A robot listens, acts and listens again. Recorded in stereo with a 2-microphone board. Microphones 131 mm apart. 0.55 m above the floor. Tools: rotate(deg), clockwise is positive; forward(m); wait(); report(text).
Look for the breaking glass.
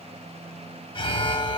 wait()
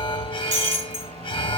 rotate(70)
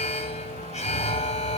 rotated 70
wait()
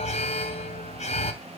report("I heard breaking glass, but can't make it out now. It was about straight ahead or 40° right.")